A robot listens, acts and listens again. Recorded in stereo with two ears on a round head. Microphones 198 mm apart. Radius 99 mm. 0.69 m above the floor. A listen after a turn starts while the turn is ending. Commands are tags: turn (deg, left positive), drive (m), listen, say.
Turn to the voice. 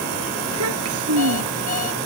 <turn deg="-90"/>
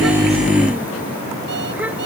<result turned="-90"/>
<listen/>
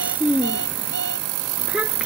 <say>Found it: a child speaking, straight ahead.</say>